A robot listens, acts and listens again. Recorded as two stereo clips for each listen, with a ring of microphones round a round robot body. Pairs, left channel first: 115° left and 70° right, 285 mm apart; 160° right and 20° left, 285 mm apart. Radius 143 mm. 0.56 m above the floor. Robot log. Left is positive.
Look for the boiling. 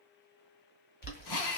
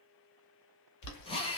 note: The boiling: 170° left.
cmd yaw +170
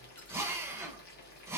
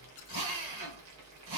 note: The boiling is now 55° left.
cmd yaw +55
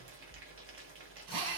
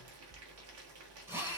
note: The boiling is now 20° right.
cmd yaw -20
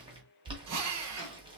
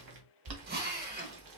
end: Facing the boiling.